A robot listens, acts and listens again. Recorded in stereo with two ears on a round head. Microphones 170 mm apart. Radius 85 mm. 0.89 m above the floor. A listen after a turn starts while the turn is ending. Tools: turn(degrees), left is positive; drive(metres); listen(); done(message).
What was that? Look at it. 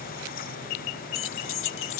turn(degrees=75)
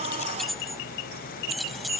done("Facing the keys jangling.")